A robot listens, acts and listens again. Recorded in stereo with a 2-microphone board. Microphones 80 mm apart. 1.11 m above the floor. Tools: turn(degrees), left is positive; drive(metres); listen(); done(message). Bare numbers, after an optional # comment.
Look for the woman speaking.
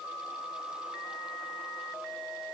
listen()
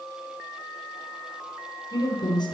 turn(90)
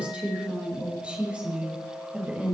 # So it is at 10° right.
turn(-10)
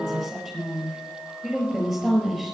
done("Found it: a woman speaking, straight ahead.")